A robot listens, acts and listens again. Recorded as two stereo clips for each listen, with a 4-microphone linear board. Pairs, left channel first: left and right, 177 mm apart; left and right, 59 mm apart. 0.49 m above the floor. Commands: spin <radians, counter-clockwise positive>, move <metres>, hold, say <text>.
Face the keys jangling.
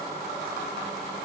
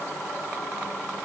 hold
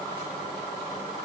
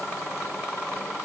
hold
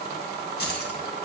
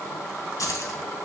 spin 1.22
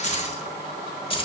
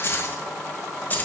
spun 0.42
spin 0.52
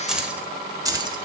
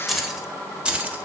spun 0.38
spin -0.44
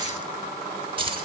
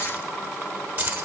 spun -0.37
spin -0.52
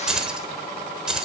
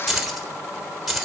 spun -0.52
say Facing the keys jangling.